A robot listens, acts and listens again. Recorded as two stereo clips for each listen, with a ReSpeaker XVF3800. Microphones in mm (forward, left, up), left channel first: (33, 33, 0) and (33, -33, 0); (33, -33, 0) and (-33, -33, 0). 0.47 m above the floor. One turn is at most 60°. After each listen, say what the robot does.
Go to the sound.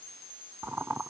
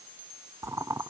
Turn 60° right.
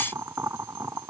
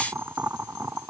Turn 60° right.
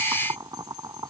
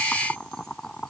Turn 60° right.
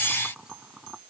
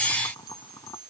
Turn 15° right.
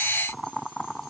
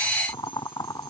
Drive 1.0 m forward.
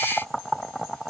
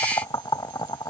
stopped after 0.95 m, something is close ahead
I am next to the boiling.